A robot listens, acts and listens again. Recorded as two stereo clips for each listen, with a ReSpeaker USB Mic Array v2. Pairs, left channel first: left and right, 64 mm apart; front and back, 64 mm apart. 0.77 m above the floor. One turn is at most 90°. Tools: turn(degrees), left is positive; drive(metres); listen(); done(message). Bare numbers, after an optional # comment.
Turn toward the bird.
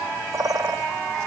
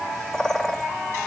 # The bird: 85° right.
turn(-85)
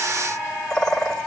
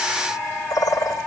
# The bird is now 10° left.
turn(10)
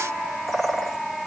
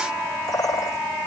done("Facing the bird, 2 to 4 m away.")